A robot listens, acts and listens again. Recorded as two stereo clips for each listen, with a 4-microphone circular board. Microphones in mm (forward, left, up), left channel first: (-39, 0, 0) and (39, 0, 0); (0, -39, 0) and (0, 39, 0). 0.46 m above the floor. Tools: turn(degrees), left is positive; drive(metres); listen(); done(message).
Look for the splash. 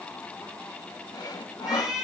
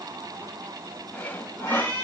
listen()
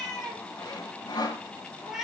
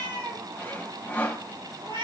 listen()
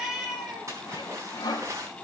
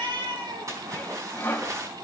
turn(degrees=45)
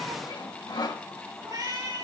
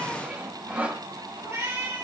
done("Facing where the splash came from. I can't hear it now.")